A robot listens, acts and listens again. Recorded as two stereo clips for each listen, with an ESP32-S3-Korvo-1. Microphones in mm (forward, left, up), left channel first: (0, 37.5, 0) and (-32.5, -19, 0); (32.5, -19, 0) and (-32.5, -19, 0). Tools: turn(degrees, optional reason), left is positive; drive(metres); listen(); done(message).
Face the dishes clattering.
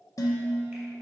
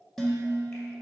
turn(degrees=85, reason="The dishes clattering: 85° left.")
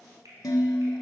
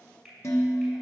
turn(degrees=40, reason="The dishes clattering is now 40° left.")
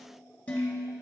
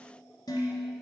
turn(degrees=-10, reason="The dishes clattering is now 10° right.")
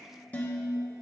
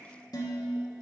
turn(degrees=-10, reason="The dishes clattering is now 10° right.")
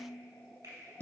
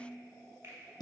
done("Found it: dishes clattering, straight ahead, 1 to 2 m away.")